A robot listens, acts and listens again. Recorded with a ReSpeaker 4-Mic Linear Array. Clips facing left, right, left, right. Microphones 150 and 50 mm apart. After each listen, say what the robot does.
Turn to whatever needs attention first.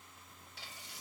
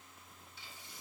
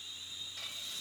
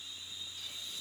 Keep listening.
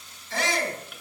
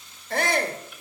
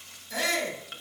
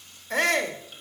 Turn 55° right.
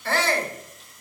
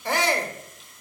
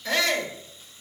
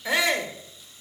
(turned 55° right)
Turn 20° right.
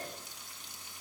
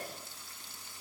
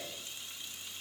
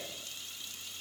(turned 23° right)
Keep listening.
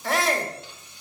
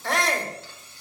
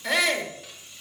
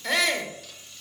Facing the shout, 1 to 2 m away.